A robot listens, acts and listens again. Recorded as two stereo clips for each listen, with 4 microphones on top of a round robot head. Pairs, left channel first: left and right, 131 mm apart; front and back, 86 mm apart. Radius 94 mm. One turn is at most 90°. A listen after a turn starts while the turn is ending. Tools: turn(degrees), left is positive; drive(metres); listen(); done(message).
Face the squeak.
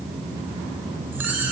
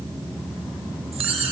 turn(degrees=-90)
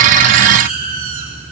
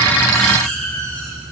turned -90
turn(degrees=-75)
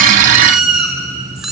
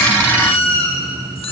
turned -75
done("Found it: a squeak, straight ahead, over 4 m away.")